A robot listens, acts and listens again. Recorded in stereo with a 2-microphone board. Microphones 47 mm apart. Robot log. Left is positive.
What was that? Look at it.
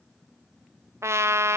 cmd yaw -90
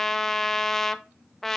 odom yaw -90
note: So it is at 10° left.
cmd yaw +10
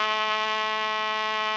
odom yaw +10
end: Found it: a trumpet, straight ahead.